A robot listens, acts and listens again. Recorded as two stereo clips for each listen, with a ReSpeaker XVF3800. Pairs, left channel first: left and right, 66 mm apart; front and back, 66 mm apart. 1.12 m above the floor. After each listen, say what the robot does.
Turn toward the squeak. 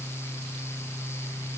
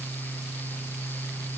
Keep listening.
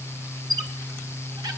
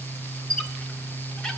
Turn 75° right.
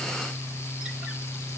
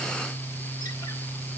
Keep listening.
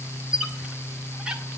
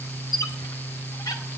Turn 10° right.
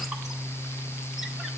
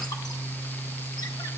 Keep listening.
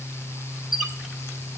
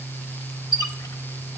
Facing the squeak.